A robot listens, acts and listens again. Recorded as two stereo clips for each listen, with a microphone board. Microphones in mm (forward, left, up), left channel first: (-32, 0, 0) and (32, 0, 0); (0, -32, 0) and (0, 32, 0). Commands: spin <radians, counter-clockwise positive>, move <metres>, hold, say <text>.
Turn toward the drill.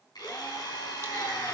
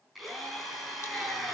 spin 3.14
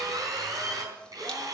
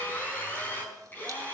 spin -0.44
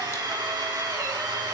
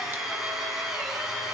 spin 0.17
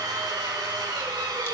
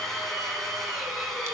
say Facing the drill, over 4 m away.